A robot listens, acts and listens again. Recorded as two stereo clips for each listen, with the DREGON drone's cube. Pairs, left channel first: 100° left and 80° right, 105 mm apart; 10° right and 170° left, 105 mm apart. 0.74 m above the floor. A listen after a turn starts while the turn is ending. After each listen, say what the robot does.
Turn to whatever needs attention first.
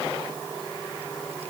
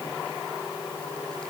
Keep listening.
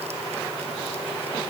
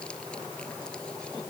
Keep listening.
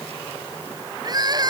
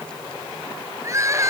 Turn 130° right.
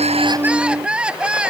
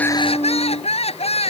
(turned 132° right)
Facing the crying.